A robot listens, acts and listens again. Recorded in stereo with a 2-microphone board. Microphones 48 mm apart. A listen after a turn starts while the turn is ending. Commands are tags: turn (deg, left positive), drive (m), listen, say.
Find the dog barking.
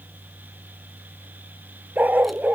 <turn deg="-35"/>
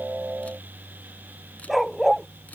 <say>Facing the dog barking.</say>